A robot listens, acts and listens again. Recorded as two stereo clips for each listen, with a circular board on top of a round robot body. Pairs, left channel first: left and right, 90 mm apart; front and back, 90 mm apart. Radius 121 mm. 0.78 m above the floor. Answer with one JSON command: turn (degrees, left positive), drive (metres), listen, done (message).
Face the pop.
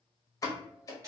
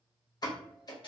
{"turn": 40}
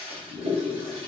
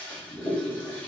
{"done": "I heard a pop from this way, but can't make it out now."}